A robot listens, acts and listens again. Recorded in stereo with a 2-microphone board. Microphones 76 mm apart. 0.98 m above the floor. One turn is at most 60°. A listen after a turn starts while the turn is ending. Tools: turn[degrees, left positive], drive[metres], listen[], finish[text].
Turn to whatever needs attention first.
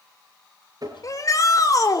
Thought: The shout: about 50° left or 130° left.
Action: turn[50]
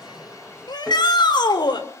Thought: So it is at 80° left.
Action: turn[60]
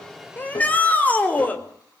Thought: The shout is now 20° left.
Action: turn[20]
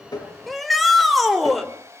Action: finish[Facing the shout, over 4 m away.]